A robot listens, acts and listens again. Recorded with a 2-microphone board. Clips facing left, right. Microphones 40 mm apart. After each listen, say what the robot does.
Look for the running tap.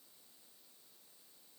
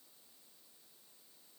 Keep listening.
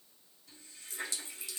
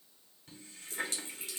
Turn 50° right.
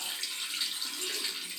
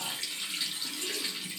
Found it: a running tap, straight ahead, 1 to 2 m away.